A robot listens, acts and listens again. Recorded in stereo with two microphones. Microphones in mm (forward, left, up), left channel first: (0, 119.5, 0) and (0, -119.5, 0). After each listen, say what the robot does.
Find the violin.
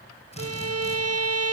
Turn 90° right.
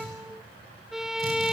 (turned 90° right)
Found it: a violin, straight ahead.